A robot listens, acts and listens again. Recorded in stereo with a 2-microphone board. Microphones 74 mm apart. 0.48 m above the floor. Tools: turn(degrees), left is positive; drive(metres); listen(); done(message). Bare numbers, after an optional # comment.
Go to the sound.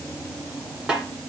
turn(-30)
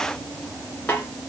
# So it is at 20° left.
turn(20)
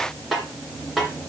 drive(1.0)
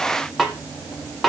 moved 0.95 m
drive(1.0)
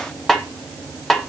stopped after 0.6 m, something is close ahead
done("I am next to the snare drum.")